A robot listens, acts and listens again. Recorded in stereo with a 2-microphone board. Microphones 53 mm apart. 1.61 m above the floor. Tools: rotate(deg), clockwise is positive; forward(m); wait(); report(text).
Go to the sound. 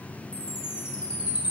rotate(25)
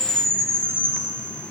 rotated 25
rotate(135)
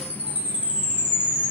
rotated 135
rotate(20)
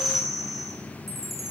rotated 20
forward(1.0)
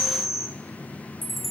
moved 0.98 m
forward(1.0)
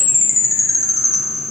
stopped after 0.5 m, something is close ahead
report("I am next to the chime.")